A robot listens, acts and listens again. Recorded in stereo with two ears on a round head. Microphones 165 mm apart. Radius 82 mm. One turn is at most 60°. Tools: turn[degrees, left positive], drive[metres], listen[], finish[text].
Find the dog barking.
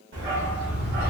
Thought: The dog barking: about 55° right or 125° right.
Action: turn[-55]
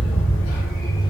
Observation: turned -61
Thought: So it is at 20° left.
Action: turn[20]
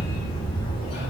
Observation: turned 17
Thought: The dog barking is now 30° left.
Action: turn[30]
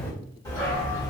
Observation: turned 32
Thought: The dog barking is now 25° left.
Action: turn[25]
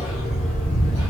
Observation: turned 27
Thought: The dog barking is now 10° left.
Action: turn[10]
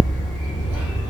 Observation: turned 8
Action: finish[Facing the dog barking.]